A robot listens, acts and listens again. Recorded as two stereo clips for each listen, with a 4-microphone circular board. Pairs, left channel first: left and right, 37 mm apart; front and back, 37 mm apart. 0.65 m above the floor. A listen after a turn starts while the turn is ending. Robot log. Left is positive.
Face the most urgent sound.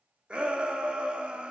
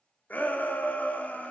note: The shout: 35° right.
cmd yaw -35
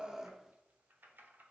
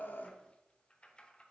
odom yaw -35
cmd idle
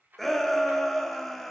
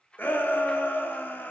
end: Found it: a shout, straight ahead.